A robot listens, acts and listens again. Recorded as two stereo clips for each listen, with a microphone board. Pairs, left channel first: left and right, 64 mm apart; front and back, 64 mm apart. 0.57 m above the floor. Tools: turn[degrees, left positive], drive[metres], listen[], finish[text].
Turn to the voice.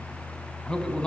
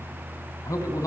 Thought: The man speaking: 15° left.
Action: turn[15]
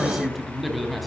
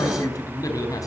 Action: finish[Found it: a man speaking, straight ahead.]